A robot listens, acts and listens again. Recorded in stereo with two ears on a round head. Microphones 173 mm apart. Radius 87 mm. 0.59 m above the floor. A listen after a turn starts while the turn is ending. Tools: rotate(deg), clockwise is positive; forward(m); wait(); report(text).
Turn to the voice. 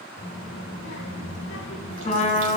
rotate(-65)
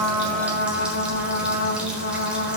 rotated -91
rotate(-20)
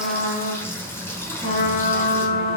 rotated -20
report("Found it: a child speaking, straight ahead.")